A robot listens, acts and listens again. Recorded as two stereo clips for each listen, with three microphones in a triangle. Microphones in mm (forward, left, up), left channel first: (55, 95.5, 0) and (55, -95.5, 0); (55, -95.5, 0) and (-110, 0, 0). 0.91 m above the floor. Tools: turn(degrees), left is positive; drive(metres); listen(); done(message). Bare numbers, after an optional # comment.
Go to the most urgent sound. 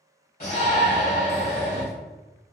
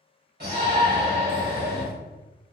# The shout: 130° left.
turn(130)
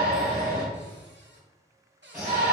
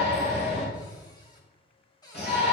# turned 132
drive(1.0)
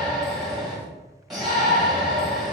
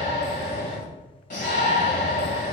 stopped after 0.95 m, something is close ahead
done("I am next to the shout.")